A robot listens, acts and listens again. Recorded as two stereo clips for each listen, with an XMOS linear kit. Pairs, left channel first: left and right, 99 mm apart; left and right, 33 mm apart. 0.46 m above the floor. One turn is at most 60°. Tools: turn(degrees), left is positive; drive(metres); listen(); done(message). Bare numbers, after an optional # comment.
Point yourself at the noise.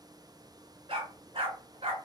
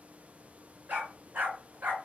# The dog barking: about 75° right or 105° right.
turn(-60)
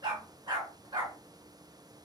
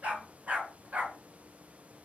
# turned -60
# So it is at 45° right.
turn(-45)
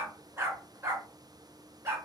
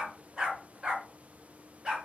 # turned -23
# The dog barking is now 25° right.
turn(-25)
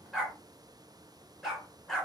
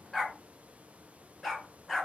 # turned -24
done("Facing the dog barking, 1 to 2 m away.")